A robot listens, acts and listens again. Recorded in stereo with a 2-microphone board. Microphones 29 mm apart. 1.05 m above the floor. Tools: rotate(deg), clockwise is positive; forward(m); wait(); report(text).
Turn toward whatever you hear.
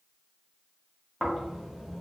rotate(30)
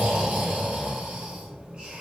rotate(145)
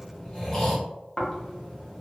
rotate(-20)
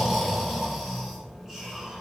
report("Facing the snoring, under 1 m away.")